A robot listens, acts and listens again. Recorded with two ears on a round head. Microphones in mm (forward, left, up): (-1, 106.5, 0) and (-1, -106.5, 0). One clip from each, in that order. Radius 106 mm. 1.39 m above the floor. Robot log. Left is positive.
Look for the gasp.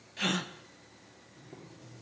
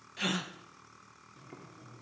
cmd yaw +30
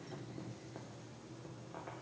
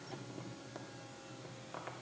cmd idle
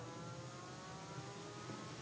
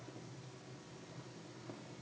end: I heard a gasp, but can't make it out now. It was about 25° right or 145° left.